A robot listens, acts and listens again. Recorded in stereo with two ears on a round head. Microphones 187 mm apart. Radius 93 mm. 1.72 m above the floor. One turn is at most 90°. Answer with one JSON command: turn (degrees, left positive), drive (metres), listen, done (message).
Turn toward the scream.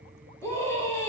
{"turn": 30}
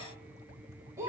{"turn": -15}
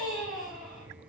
{"done": "Facing the scream, over 4 m away."}